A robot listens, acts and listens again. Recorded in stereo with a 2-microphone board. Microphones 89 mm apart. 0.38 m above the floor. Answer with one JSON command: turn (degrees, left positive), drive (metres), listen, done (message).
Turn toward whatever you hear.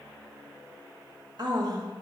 {"turn": -50}
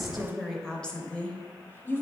{"turn": 30}
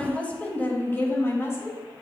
{"turn": 35}
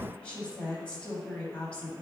{"turn": 15}
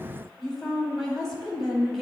{"done": "Facing the woman speaking, 1 to 2 m away."}